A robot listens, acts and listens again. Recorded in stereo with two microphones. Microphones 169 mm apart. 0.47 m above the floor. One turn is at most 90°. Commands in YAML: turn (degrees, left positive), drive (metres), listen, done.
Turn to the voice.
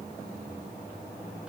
listen: true
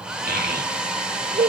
turn: -65
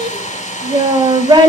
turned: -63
turn: -30
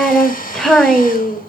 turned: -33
done: "Facing the child speaking."